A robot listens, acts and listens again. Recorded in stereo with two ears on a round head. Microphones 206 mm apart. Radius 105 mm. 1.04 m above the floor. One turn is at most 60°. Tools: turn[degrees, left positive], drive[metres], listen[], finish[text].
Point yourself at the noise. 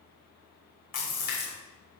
Thought: The splash: about 35° left or 145° left.
Action: turn[35]
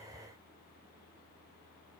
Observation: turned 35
Action: listen[]
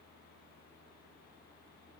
Action: finish[I heard a splash, but can't make it out now. It was about straight ahead or 110° left.]